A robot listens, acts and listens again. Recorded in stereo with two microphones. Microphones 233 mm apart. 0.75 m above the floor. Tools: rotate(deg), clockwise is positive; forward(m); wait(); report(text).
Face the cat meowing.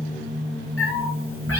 rotate(-70)
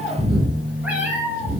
rotate(10)
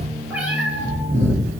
rotate(10)
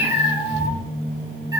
rotate(15)
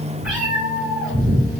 report("Found it: a cat meowing, straight ahead.")